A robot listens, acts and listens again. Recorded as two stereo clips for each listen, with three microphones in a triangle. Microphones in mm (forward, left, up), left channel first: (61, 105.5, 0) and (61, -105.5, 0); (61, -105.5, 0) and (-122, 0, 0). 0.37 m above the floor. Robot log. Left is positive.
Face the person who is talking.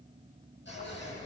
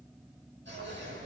cmd idle
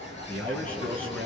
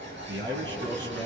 note: The man speaking: 175° left.
cmd yaw +175
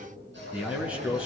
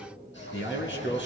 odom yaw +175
end: Found it: a man speaking, straight ahead.